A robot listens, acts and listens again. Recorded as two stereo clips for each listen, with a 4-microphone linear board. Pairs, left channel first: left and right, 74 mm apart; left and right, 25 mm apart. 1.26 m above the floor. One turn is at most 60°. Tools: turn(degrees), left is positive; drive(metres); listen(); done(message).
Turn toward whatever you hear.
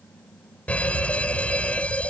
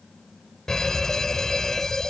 turn(degrees=15)
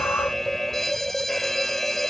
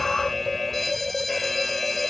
done("Found it: a fire alarm, straight ahead.")